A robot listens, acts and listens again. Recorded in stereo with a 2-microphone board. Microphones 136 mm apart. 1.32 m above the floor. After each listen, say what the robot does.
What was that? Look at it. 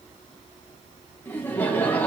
Turn 30° left.
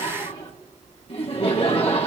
Turn 135° left.
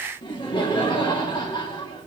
Turn 35° left.
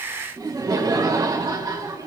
Turn 25° right.
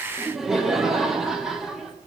Facing the laughter.